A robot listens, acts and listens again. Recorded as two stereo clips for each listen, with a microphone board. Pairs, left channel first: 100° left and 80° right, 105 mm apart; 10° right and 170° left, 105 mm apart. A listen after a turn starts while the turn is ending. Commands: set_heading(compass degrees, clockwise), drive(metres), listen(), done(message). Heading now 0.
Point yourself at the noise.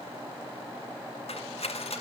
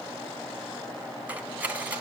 set_heading(265)
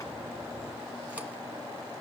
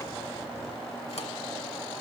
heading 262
listen()
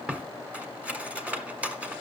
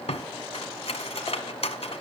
done("Facing the cutlery clinking, 1 to 2 m away.")